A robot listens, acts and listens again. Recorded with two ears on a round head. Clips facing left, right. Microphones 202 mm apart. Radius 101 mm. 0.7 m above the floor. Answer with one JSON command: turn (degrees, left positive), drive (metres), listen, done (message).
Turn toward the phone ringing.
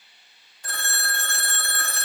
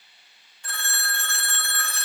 {"turn": 35}
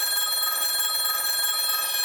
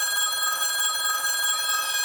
{"done": "Facing the phone ringing, under 1 m away."}